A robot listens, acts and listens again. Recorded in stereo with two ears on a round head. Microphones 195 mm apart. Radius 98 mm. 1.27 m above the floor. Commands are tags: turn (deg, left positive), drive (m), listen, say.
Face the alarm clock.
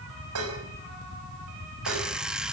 <turn deg="-30"/>
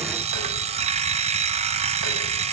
<turn deg="-145"/>
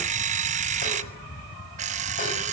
<turn deg="-40"/>
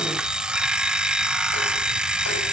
<say>Facing the alarm clock.</say>